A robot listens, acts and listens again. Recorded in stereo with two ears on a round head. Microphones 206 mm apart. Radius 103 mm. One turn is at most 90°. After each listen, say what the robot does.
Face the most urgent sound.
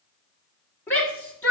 Turn 30° left.
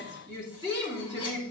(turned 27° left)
Turn 20° right.
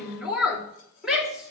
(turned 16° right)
Found it: a shout, straight ahead.